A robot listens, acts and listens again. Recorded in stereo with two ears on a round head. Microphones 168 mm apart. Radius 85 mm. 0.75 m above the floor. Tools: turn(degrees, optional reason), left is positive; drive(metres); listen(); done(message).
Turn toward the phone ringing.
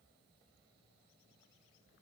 listen()
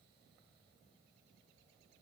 listen()
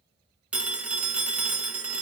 turn(degrees=-30)
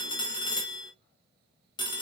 turn(degrees=25, reason="So it is at 25° left.")
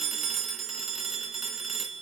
done("Facing the phone ringing, 1 to 2 m away.")